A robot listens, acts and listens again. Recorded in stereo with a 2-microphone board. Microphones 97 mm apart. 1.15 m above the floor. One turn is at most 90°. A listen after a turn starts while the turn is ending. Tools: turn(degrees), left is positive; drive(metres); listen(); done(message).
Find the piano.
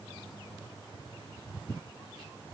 listen()
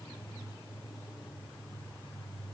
listen()
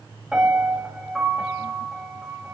turn(degrees=-30)
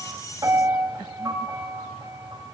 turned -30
turn(degrees=-90)
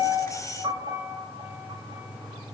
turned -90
turn(degrees=-50)
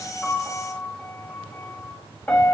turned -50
turn(degrees=15)
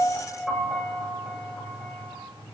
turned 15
done("Found it: a piano, straight ahead, over 4 m away.")